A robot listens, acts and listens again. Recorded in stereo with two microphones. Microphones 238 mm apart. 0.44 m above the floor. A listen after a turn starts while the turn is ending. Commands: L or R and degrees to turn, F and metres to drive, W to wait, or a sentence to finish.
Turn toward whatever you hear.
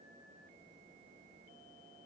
W
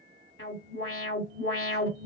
L60
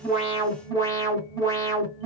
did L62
L15
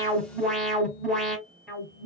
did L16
Facing the alarm.